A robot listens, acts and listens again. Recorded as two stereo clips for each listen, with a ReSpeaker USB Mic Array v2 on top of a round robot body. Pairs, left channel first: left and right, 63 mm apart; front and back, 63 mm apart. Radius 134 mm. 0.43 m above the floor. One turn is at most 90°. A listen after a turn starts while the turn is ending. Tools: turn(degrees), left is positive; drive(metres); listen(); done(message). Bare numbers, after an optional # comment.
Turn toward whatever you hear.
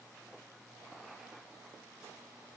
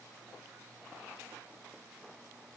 listen()
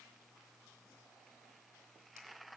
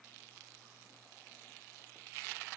listen()
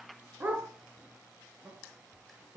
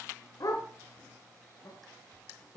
# The dog barking: 25° right.
turn(-25)
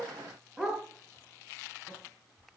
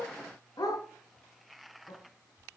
# The dog barking is now 10° right.
turn(-10)
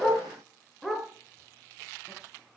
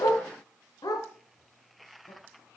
done("Found it: a dog barking, straight ahead, over 4 m away.")